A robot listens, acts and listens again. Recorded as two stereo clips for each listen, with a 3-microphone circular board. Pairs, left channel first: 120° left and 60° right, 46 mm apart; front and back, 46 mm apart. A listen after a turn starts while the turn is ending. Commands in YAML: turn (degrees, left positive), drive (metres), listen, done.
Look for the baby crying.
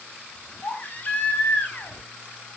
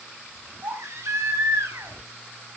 turn: 175
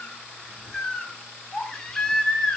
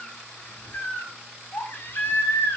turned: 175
turn: 40
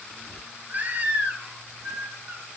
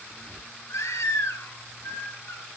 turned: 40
done: "Facing the baby crying, over 4 m away."